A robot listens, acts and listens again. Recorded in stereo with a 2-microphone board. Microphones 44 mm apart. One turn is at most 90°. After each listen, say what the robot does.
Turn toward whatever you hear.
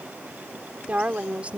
Turn 30° right.
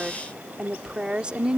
Turn 25° right.
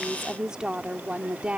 Turn 25° right.
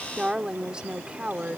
Turn 25° right.
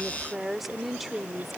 Found it: a woman speaking, straight ahead.